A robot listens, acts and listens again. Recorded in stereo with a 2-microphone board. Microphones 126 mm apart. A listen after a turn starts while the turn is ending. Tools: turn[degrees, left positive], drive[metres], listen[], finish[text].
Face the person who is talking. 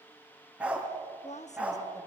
Thought: The woman speaking: about 65° left or 115° left.
Action: turn[65]
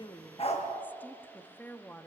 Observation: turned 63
Thought: So it is at 15° left.
Action: turn[15]
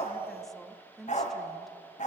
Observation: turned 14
Action: finish[Facing the woman speaking.]